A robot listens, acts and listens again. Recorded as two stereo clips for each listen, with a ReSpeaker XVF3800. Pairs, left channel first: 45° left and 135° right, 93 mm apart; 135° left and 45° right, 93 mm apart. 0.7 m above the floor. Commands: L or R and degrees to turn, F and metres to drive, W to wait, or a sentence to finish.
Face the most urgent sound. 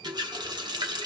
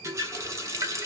W
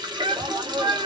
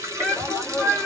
R135
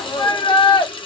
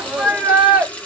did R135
L30
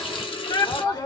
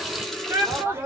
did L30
L15
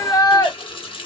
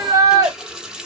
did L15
Found it: a shout, straight ahead, 1 to 2 m away.